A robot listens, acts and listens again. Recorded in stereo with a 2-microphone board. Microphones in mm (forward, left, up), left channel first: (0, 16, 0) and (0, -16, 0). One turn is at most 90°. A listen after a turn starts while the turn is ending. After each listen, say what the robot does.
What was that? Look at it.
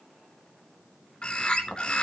Turn 30° left.
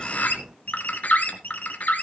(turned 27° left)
Turn 90° left.
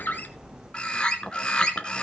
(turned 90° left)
Turn 30° left.
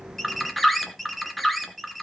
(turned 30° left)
Facing the bird.